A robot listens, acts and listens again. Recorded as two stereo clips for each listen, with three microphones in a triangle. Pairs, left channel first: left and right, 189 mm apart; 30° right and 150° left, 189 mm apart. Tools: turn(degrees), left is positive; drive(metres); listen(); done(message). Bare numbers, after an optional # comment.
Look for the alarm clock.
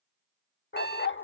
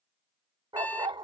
# The alarm clock: 50° left.
turn(50)
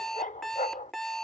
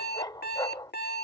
done("Found it: an alarm clock, straight ahead.")